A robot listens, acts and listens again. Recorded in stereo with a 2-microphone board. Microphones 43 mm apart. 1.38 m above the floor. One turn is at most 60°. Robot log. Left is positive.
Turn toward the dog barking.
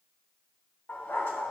note: The dog barking: about 65° left or 115° left.
cmd yaw +60
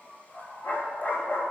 note: So it is at 50° left.
cmd yaw +50
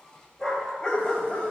note: The dog barking is now 25° left.
cmd yaw +25
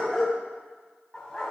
note: The dog barking is now 20° left.
cmd yaw +20
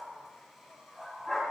end: Facing the dog barking, 2 to 4 m away.